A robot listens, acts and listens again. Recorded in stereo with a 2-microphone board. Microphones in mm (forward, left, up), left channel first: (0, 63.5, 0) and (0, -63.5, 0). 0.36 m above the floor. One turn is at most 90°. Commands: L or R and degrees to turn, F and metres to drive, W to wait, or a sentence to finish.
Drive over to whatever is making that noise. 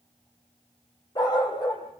L35
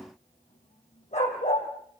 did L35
L90
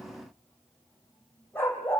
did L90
L15
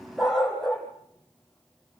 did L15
F1.0
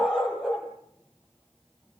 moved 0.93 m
F1.0
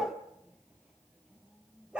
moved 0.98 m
R10
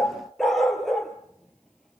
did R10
F1.0
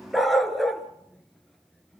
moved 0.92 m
F1.0
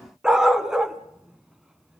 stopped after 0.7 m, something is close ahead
I am next to the dog barking.